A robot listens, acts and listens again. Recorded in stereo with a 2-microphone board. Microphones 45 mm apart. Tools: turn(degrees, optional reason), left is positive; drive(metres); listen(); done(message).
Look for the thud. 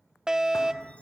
turn(degrees=90)
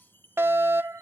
done("Facing where the thud came from. I can't hear it now.")